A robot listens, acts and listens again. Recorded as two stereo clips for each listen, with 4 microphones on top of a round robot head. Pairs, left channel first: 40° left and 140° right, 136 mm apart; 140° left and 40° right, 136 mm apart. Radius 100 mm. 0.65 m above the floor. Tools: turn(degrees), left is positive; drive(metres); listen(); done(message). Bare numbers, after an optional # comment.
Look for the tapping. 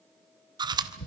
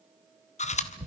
# The tapping: 45° left.
turn(45)
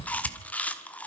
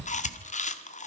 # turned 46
done("Found it: tapping, straight ahead, over 4 m away.")